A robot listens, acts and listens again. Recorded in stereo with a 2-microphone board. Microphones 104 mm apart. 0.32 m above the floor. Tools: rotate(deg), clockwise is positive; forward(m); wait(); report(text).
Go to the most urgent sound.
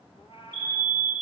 rotate(-25)
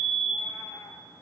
forward(1.0)
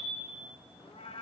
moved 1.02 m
wait()
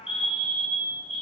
forward(1.0)
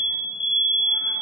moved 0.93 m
forward(1.0)
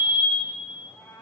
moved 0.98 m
forward(1.0)
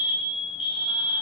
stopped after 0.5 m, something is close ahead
report("I am next to the fire alarm.")